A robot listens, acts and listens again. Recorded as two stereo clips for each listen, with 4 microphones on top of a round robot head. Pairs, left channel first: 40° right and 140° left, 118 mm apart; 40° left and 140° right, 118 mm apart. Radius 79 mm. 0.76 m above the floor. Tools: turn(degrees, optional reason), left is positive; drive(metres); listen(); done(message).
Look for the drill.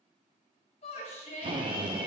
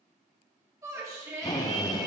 turn(degrees=95, reason="The drill: 95° left.")
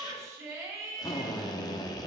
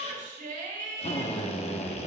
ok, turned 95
turn(degrees=15, reason="The drill is now 15° left.")
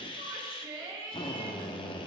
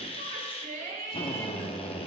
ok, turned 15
done("Found it: a drill, straight ahead, 1 to 2 m away.")